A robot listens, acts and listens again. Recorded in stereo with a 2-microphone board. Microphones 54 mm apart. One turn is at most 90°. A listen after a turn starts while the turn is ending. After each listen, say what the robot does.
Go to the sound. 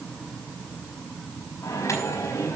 Turn 70° left.
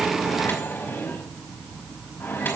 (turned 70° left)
Turn 40° left.
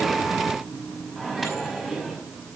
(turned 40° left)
Drive 1.0 m forward.
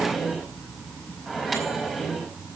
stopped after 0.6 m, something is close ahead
Something is in my way. I am facing the microwave but have not reached it.